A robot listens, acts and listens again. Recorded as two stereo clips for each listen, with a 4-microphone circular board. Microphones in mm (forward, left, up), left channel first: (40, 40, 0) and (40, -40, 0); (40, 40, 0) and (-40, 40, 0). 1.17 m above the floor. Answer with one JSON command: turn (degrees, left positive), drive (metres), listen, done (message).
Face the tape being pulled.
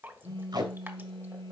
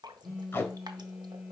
{"turn": -60}
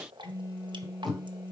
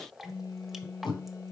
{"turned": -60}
{"done": "Found it: tape being pulled, straight ahead."}